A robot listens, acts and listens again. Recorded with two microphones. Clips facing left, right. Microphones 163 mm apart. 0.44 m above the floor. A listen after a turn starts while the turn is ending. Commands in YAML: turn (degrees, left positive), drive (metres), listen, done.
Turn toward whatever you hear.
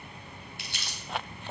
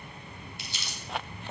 turn: 70
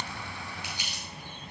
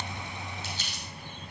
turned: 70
turn: 15
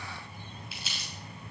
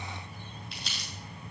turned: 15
done: "Facing the crumpling, 2 to 4 m away."